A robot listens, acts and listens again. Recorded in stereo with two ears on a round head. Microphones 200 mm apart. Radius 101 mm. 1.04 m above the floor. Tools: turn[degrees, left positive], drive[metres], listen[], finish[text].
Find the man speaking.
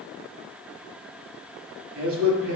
Thought: The man speaking: about 70° right or 110° right.
Action: turn[-70]
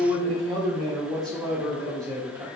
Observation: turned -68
Thought: So it is at 15° right.
Action: turn[-15]
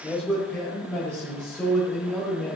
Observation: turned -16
Thought: The man speaking is now 10° left.
Action: turn[10]
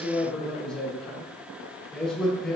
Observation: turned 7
Action: finish[Found it: a man speaking, straight ahead, over 4 m away.]